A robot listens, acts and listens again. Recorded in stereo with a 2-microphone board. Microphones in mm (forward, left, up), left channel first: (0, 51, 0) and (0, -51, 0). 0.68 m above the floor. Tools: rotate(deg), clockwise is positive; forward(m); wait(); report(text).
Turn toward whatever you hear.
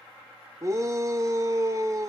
rotate(30)
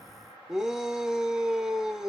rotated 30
report("Facing the shout.")